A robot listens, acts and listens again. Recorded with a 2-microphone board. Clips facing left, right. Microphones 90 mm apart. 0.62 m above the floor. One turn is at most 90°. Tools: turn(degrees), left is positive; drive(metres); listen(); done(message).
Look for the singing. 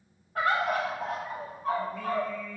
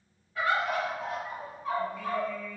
turn(degrees=65)
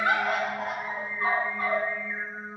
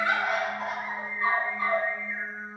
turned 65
turn(degrees=55)
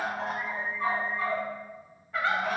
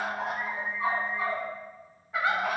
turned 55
turn(degrees=10)
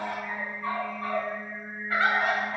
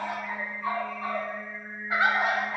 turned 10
turn(degrees=10)
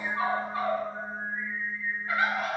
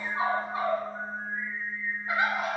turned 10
done("Found it: singing, straight ahead, 2 to 4 m away.")